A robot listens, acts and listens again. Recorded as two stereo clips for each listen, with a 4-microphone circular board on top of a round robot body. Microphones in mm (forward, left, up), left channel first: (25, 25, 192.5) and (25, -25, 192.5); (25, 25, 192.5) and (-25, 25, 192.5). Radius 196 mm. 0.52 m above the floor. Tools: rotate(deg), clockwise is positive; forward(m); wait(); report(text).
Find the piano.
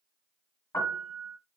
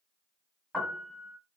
rotate(-100)
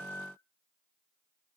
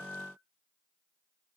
rotate(-35)
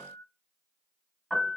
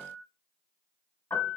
report("Found it: a piano, straight ahead.")